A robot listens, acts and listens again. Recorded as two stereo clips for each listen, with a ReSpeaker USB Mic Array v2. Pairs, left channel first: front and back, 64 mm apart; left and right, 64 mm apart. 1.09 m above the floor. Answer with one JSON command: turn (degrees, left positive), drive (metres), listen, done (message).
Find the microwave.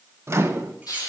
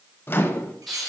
{"turn": 140}
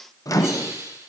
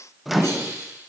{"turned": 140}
{"done": "Found it: a microwave, straight ahead, under 1 m away."}